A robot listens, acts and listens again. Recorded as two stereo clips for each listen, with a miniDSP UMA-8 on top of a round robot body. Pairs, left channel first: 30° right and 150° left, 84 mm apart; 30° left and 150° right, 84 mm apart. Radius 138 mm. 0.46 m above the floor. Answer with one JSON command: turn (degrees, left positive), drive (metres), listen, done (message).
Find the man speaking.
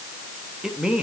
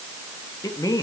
{"turn": 70}
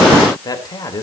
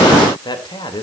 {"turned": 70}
{"turn": 15}
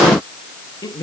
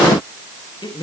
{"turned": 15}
{"done": "Facing the man speaking."}